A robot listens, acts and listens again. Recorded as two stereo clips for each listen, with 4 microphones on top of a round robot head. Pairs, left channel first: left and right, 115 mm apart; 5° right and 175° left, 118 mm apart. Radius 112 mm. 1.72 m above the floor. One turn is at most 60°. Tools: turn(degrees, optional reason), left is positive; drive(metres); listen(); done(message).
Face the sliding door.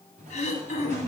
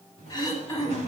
turn(degrees=-50, reason="The sliding door: 50° right.")
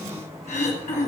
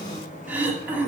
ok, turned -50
done("Found it: a sliding door, straight ahead, 2 to 4 m away.")